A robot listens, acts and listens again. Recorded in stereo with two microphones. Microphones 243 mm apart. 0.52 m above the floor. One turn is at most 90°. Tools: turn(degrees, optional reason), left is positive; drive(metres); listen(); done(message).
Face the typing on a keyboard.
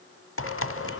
turn(degrees=60, reason="The typing on a keyboard: about 60° left or 120° left.")
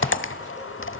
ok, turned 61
turn(degrees=55, reason="So it is at 55° left.")
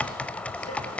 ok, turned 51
done("Facing the typing on a keyboard, under 1 m away.")